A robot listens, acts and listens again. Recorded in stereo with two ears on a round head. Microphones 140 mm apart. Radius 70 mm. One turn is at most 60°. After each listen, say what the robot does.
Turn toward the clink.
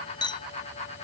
Turn 30° left.
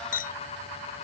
Turn 60° left.
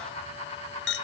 Turn 60° left.
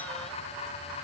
Turn 30° left.
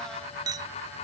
Turn 25° right.
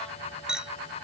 Facing the clink.